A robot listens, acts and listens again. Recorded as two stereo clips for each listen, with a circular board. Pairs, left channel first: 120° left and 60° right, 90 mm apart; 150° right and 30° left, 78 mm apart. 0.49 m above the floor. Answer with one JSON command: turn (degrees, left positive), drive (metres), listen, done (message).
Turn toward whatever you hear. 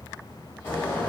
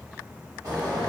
{"turn": 55}
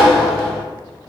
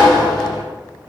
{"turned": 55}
{"turn": 20}
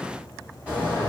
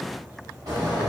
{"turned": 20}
{"turn": 10}
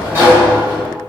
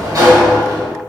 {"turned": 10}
{"done": "Facing the sliding door, 1 to 2 m away."}